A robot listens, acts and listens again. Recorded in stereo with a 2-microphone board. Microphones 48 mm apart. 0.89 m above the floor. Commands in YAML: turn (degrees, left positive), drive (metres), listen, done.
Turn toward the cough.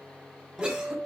turn: -25
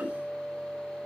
listen: true
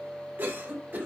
turn: -135
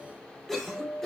turn: 10
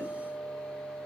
listen: true
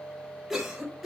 done: "Facing the cough."